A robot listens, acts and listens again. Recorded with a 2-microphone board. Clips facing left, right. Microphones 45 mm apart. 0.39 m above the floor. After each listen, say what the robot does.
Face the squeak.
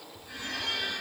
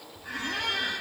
Turn 90° right.
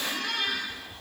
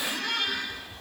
Found it: a squeak, straight ahead.